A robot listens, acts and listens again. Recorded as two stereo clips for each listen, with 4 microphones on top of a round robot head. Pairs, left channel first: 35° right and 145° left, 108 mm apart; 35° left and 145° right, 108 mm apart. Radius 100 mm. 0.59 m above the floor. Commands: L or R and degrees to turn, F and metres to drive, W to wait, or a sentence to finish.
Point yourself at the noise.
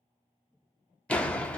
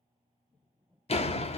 L45
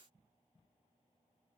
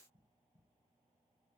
Facing where the door slam came from. I can't hear it now.